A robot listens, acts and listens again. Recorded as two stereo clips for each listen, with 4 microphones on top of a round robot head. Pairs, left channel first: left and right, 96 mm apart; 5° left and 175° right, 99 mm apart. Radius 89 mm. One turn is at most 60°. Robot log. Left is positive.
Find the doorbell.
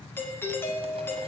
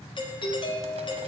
note: The doorbell: 25° left.
cmd yaw +25
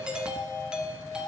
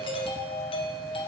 note: The doorbell is now 10° right.
cmd yaw -10
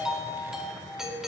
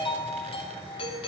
end: Found it: a doorbell, straight ahead.